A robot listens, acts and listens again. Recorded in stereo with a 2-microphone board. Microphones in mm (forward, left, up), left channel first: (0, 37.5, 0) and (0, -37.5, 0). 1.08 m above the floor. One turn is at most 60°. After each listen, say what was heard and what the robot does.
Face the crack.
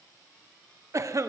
Keep listening.
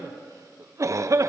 Keep listening.
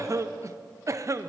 I can't make out a crack to turn to.